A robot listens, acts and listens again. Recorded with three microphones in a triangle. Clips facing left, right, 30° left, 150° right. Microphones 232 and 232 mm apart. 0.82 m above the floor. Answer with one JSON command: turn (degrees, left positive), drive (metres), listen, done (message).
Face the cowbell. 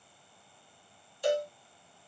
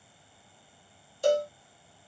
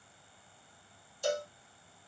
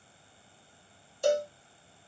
{"turn": -130}
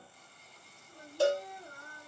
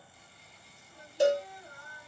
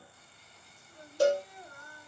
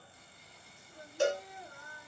{"turn": -20}
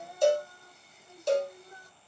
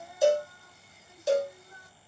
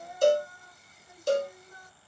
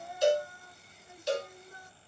{"done": "Found it: a cowbell, straight ahead."}